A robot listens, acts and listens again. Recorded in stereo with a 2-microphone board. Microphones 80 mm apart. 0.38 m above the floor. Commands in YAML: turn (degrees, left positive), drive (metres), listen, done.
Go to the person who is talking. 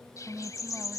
turn: -20
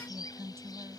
turn: -140
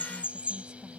listen: true
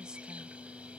listen: true
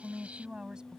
turn: -10
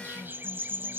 listen: true
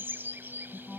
drive: 1.0
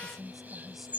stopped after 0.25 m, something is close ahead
done: "Something is in my way. I am facing the woman speaking but have not reached it."